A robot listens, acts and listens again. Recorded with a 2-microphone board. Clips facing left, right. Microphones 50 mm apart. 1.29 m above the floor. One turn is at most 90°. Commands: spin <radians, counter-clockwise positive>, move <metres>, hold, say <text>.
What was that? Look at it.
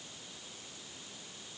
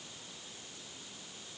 hold
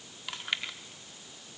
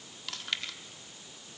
spin 0.26
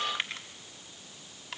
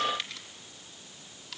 spin 1.57
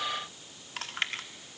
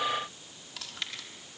spin 0.87
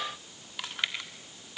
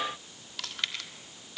spin 0.35
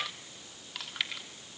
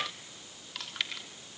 say Facing the chewing.